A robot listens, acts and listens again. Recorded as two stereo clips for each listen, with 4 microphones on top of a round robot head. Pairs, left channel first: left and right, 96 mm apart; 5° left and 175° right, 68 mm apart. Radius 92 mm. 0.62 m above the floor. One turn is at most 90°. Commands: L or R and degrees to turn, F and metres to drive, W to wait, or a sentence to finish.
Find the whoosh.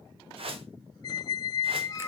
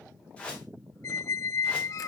R70
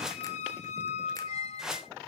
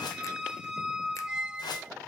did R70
Found it: a whoosh, straight ahead, 1 to 2 m away.